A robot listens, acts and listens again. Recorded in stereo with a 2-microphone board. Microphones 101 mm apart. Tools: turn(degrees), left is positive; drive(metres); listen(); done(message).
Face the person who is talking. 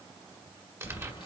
listen()
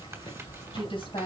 turn(degrees=65)
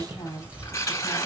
listen()
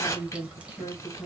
turn(degrees=45)
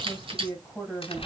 done("Found it: a woman speaking, straight ahead.")